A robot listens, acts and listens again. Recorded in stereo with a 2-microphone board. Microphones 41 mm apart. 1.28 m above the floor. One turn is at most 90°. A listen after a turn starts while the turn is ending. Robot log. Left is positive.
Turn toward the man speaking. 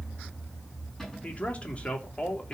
note: The man speaking: about 30° left or 150° left.
cmd yaw +30
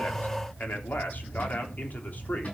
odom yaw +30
note: So it is at 135° left.
cmd yaw +90
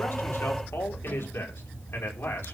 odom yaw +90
note: The man speaking is now 80° left.
cmd yaw +80
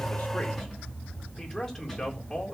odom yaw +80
note: The man speaking is now 10° left.
cmd yaw +10
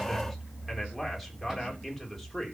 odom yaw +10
end: Found it: a man speaking, straight ahead, 2 to 4 m away.